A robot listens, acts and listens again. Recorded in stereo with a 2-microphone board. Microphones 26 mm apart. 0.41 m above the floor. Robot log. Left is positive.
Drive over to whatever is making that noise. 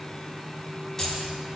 note: The keys jangling: about 20° left or 160° left.
cmd yaw +20
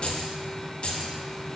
note: So it is at 135° left.
cmd yaw +135
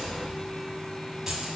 note: The keys jangling is now 25° right.
cmd yaw -25
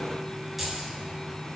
note: The keys jangling is now 10° right.
cmd yaw -10
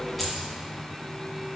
cmd fwd 1.0
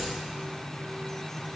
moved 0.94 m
cmd idle
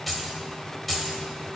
cmd fwd 1.0
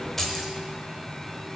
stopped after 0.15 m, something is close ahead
note: The keys jangling is now 10° left.
cmd yaw +10
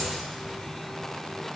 cmd idle
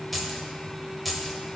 end: I am next to the keys jangling.